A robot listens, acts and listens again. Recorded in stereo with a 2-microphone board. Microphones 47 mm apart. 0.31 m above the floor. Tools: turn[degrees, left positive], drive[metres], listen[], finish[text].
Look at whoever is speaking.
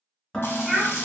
Thought: The child speaking: about 20° right or 160° right.
Action: turn[-20]
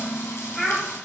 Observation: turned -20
Action: finish[Facing the child speaking.]